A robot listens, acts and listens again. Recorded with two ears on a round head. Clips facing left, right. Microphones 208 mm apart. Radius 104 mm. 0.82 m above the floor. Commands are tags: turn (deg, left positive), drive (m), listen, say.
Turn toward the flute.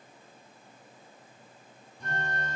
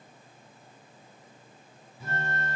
<turn deg="-30"/>
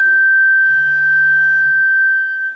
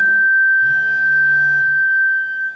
<turn deg="25"/>
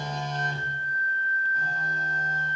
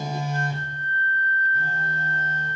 <say>Found it: a flute, straight ahead.</say>